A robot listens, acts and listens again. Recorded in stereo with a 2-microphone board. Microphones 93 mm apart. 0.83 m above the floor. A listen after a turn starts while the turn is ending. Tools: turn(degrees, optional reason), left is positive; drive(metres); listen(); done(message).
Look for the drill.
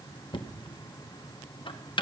listen()
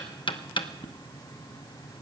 listen()
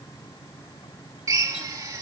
turn(degrees=-40, reason="The drill: about 40° right or 140° right.")
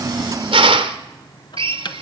turn(degrees=-100, reason="So it is at 100° right.")
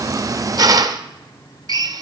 turn(degrees=-45, reason="The drill is now 45° right.")
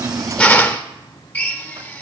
turn(degrees=20, reason="The drill is now 20° left.")
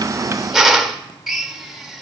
done("Found it: a drill, straight ahead, 1 to 2 m away.")